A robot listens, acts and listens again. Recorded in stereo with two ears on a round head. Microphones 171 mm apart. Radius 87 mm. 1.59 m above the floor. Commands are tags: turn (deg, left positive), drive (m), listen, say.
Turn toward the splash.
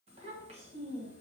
<listen/>
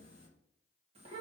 <listen/>
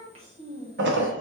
<turn deg="-65"/>
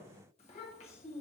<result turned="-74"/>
<listen/>
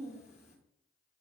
<say>I heard a splash, but can't make it out now. It was about 10° left or 40° right.</say>